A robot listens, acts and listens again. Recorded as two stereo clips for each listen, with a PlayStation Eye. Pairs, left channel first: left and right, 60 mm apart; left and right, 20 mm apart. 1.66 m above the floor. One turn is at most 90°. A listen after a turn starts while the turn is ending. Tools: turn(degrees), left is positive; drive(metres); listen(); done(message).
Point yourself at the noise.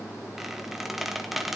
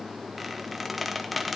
turn(degrees=-30)
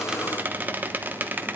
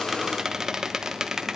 turn(degrees=-90)
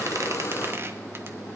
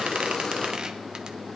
turn(degrees=-55)
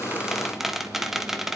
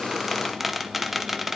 done("Facing the squeak.")